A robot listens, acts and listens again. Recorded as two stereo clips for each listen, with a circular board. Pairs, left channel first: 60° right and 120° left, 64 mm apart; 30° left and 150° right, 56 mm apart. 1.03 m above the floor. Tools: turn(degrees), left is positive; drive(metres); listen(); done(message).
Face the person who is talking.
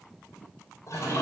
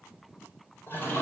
listen()
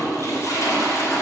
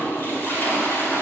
listen()
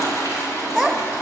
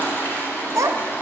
turn(degrees=-145)
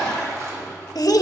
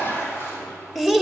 turn(degrees=-50)
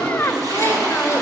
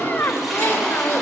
done("Found it: a child speaking, straight ahead, 1 to 2 m away.")